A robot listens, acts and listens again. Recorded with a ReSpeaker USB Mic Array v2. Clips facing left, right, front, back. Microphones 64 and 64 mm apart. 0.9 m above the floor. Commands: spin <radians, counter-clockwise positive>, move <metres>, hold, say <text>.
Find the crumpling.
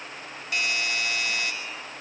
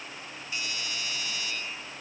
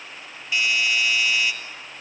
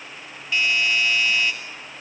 hold
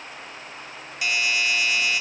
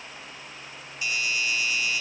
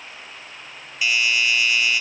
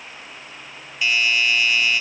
hold
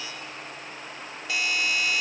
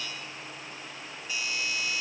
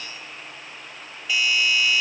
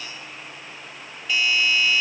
say I can't make out crumpling to turn to.